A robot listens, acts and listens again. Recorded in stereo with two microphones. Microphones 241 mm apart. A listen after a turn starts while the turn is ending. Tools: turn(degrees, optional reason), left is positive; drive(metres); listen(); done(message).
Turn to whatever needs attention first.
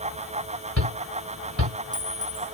turn(degrees=-90)
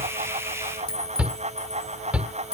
done("Facing the shout.")